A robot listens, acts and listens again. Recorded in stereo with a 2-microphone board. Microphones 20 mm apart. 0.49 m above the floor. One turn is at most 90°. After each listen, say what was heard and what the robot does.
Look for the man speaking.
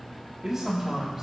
The man speaking: about 25° right or 155° right. Turn 25° right.
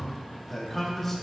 So it is at 10° left. Turn 10° left.
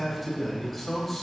The man speaking is now 10° left. Turn 10° left.
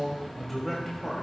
The man speaking is now 15° left. Turn 15° left.
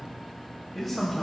The man speaking is now 10° left. Turn 10° left.
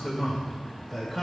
Found it: a man speaking, straight ahead, 2 to 4 m away.